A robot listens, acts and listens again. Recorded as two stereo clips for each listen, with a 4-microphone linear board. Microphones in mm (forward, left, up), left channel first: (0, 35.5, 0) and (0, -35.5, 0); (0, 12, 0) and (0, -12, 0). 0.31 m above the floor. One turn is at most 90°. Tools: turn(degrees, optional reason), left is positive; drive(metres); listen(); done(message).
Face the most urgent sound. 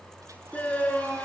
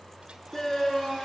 turn(degrees=20, reason="The shout: about 20° left or 160° left.")
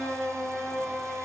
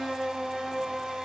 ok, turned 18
done("Found it: a shout, straight ahead.")